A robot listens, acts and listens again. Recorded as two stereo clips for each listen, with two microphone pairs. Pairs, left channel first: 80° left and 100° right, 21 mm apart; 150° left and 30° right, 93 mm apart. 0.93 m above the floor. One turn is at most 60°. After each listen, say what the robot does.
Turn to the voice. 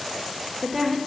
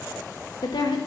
Turn 60° right.
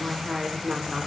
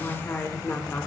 Turn 60° right.
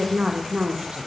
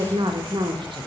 Turn 60° right.
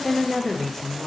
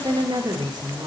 Found it: a woman speaking, straight ahead, under 1 m away.